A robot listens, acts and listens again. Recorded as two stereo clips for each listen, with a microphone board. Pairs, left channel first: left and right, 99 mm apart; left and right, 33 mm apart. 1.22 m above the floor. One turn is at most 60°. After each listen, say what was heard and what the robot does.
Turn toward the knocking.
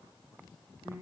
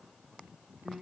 Keep listening.
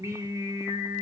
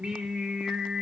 Keep listening.
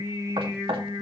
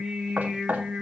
The knocking: about 70° right or 110° right. Turn 60° right.
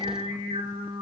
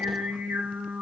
Keep listening.
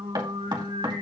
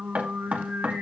So it is at 50° right. Turn 50° right.
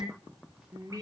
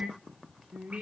Keep listening.
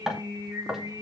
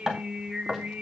Found it: knocking, straight ahead, 2 to 4 m away.